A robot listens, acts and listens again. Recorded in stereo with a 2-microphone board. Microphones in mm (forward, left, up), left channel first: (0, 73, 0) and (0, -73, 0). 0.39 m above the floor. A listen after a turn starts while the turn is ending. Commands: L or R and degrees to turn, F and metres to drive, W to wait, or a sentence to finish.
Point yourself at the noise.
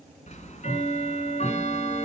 L50
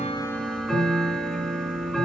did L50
Found it: ticking, straight ahead.